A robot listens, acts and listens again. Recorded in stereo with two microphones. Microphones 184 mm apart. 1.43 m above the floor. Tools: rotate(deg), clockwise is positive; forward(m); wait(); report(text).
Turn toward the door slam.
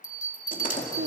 rotate(-45)
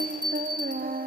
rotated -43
wait()
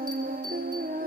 report("I heard a door slam, but can't make it out now. It was about 5° left or 90° left.")